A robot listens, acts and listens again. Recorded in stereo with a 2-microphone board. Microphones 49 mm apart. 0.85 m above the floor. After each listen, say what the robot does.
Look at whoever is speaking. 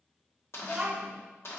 Turn 20° right.
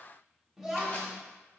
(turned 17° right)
Facing the child speaking.